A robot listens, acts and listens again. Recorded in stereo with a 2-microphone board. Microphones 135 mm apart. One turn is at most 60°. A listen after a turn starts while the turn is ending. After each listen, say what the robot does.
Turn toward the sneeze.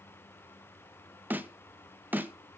Keep listening.
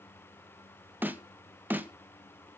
Keep listening.
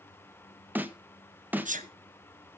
Turn 60° right.
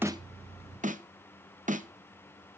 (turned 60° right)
Keep listening.
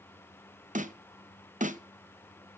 I heard a sneeze, but can't make it out now. It was about 15° right or 45° right.